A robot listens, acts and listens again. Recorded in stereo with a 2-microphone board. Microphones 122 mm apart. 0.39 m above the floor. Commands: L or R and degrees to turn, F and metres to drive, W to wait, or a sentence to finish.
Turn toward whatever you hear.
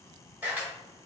R15
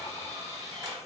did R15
R150
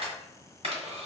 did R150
R60
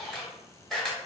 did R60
Facing the camera shutter.